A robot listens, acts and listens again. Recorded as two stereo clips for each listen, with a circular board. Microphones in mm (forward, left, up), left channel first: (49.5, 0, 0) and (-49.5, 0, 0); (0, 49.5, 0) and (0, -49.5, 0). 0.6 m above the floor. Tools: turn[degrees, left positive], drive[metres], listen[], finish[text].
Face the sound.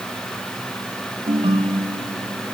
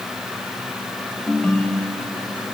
Thought: The ringtone: 170° left.
Action: turn[170]
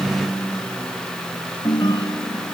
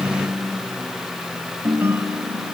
Thought: The ringtone is now 30° right.
Action: turn[-30]
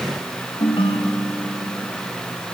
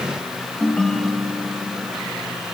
Thought: The ringtone is now 10° left.
Action: turn[10]
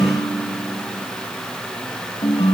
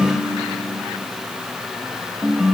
Action: finish[Facing the ringtone.]